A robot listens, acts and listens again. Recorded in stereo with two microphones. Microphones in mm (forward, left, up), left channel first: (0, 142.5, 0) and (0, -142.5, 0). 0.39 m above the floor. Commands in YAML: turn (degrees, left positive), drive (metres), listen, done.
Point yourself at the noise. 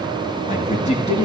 turn: 20
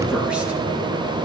listen: true
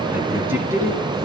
turn: -10
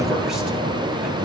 listen: true
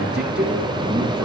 listen: true
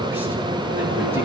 done: "I heard a man speaking from this way, but can't make it out now."